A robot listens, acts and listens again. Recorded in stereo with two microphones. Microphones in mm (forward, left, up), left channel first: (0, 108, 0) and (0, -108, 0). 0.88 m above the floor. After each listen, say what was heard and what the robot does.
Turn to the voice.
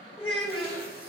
The child speaking: about 25° left or 155° left. Turn 25° left.
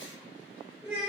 Facing the child speaking, 1 to 2 m away.